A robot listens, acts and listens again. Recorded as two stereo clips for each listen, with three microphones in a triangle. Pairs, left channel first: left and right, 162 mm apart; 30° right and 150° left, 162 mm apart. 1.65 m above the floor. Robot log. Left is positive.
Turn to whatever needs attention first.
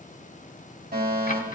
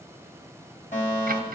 note: The fire alarm: 70° right.
cmd yaw -70
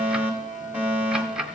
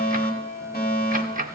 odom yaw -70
note: The fire alarm is now 10° right.
cmd yaw -10
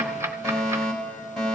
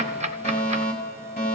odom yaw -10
end: Facing the fire alarm.